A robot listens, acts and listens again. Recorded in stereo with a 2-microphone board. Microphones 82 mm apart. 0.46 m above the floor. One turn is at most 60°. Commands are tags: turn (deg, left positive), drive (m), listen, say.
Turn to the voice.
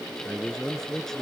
<turn deg="30"/>
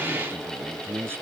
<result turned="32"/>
<turn deg="-30"/>
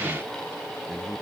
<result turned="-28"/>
<listen/>
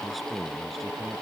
<say>Found it: a man speaking, straight ahead.</say>